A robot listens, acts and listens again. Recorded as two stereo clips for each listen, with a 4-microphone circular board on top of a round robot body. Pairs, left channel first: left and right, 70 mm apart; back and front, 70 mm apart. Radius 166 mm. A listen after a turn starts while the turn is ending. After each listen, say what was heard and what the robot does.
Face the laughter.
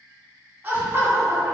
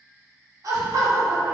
The laughter: 40° right. Turn 40° right.
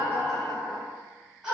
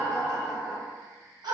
The laughter is now 10° right. Turn 10° right.
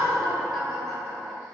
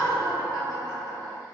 Facing the laughter, 2 to 4 m away.